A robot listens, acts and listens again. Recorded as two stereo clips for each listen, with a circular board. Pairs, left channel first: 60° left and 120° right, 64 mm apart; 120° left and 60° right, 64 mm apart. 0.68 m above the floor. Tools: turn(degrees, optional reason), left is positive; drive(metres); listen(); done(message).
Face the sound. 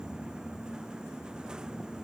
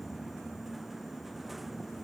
listen()
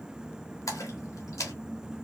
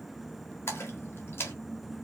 turn(degrees=75, reason="The splash: 75° left.")
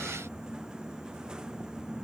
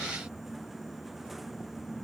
done("I heard a splash from this way, but can't make it out now.")